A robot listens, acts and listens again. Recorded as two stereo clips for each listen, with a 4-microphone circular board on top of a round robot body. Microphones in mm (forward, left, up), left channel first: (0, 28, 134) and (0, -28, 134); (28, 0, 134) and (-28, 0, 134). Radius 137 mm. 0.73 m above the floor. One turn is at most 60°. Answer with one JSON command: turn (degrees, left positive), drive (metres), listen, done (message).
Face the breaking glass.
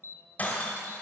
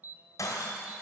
{"turn": 25}
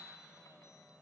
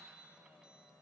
{"done": "I heard breaking glass from this way, but can't make it out now."}